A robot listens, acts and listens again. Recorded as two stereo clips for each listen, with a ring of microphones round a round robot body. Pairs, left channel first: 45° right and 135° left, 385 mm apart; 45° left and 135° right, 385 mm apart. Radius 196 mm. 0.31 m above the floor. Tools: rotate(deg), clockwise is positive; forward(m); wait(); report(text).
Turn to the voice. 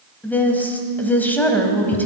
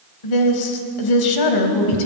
rotate(-40)
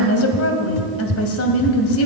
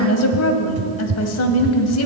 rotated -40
report("Facing the woman speaking.")